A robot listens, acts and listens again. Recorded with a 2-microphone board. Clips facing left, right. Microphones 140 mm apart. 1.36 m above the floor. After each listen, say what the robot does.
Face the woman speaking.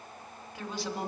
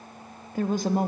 Turn 50° right.
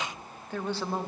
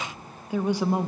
Turn 15° right.
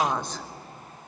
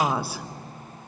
Turn 10° right.
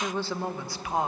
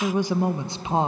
Turn 30° right.
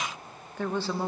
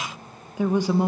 Turn 20° right.
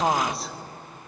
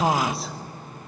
Facing the woman speaking, 1 to 2 m away.